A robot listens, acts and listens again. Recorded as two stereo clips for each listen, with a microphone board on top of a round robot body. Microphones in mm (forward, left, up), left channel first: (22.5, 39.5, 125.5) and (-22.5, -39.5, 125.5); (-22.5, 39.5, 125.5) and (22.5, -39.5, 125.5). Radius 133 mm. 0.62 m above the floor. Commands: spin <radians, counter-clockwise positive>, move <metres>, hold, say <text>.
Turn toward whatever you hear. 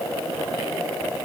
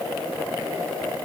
hold
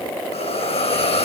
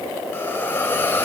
spin 0.96
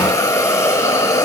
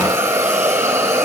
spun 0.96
say Facing the hiss, over 4 m away.